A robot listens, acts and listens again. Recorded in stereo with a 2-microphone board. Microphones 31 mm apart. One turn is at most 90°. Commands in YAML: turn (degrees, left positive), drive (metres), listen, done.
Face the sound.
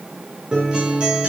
turn: -30
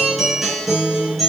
done: "Found it: a guitar, straight ahead, 2 to 4 m away."